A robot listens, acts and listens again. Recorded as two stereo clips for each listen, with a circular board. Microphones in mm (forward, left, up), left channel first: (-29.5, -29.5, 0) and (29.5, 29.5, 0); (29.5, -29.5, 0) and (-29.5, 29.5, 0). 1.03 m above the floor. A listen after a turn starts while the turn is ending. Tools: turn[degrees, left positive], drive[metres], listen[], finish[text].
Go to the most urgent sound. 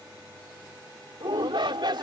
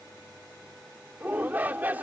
Thought: The shout: 65° left.
Action: turn[65]
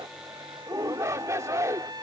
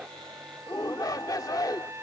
Action: drive[1.0]
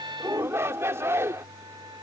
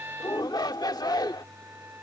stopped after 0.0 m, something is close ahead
Thought: The shout is now 10° right.
Action: turn[-10]
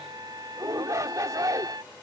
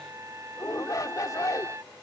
Action: finish[Blocked. The shout is further on, straight ahead.]